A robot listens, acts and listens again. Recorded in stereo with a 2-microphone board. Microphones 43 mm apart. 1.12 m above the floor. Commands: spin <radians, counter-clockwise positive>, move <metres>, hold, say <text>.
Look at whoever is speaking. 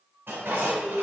spin -0.52
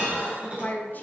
spin 0.79
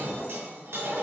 hold
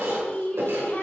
spin 0.70
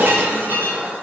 hold
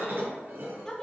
spin 0.26
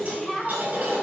say Facing the woman speaking, 2 to 4 m away.